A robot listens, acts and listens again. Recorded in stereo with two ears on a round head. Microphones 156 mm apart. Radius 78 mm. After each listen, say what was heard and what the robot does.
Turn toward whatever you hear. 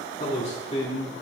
The man speaking: about 40° left or 140° left. Turn 40° left.
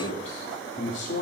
So it is at 105° left. Turn 105° left.
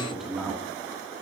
Facing the man speaking, 1 to 2 m away.